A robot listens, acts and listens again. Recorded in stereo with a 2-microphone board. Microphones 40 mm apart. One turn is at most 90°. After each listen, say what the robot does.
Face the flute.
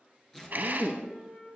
Turn 45° left.
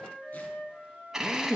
Turn 85° left.
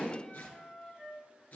Turn 10° left.
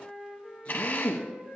Found it: a flute, straight ahead.